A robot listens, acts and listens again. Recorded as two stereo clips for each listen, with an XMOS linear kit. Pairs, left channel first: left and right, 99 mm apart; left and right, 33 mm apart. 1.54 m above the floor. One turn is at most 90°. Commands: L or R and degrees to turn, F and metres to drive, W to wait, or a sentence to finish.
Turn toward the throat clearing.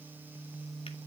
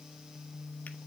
W
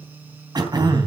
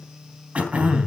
R45
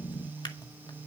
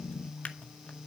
Facing the throat clearing, 2 to 4 m away.